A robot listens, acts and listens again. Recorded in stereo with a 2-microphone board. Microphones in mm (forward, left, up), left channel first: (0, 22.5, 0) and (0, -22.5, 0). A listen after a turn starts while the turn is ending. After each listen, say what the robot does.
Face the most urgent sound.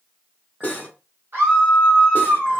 Turn 55° right.
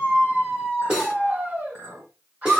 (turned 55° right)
Turn 50° right.
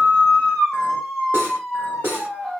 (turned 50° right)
Found it: a scream, straight ahead, 1 to 2 m away.